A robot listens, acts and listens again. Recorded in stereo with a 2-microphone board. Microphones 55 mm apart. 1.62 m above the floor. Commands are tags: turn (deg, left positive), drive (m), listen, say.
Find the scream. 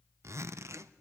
<listen/>
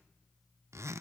<listen/>
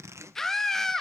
<turn deg="30"/>
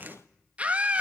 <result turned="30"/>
<turn deg="-25"/>
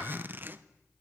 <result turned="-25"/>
<listen/>
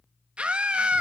<turn deg="-20"/>
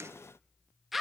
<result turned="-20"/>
<say>Facing the scream, 2 to 4 m away.</say>